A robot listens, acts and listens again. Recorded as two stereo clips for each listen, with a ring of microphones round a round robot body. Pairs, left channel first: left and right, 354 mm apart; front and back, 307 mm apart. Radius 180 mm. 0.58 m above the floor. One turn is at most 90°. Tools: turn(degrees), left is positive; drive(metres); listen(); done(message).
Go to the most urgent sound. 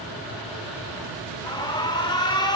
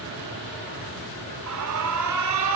turn(degrees=90)
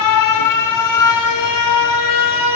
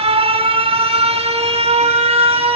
turn(degrees=90)
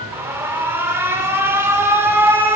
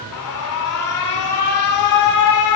drive(metres=1.0)
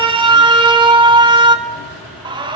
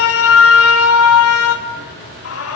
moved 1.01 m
turn(degrees=-15)
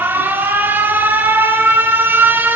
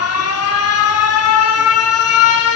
drive(metres=1.0)
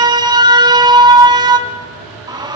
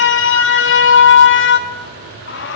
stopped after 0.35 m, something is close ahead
turn(degrees=-20)
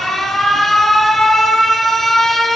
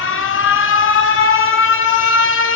done("I am next to the alarm.")